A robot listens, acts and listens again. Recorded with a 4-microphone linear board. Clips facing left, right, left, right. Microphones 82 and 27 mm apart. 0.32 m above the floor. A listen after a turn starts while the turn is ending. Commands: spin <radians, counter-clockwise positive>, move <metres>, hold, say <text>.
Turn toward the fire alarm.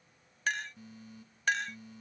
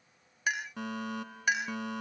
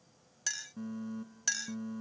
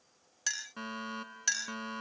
spin -1.22
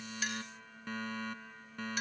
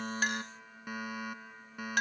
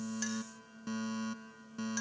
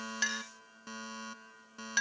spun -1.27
spin -0.17
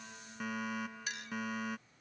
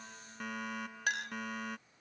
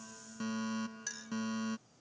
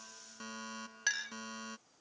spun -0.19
say Found it: a fire alarm, straight ahead.